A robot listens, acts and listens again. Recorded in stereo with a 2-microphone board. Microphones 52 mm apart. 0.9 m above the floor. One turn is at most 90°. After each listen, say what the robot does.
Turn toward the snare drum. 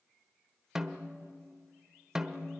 Turn 30° right.
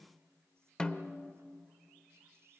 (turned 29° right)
Turn 20° left.
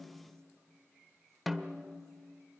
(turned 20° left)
Facing the snare drum, 1 to 2 m away.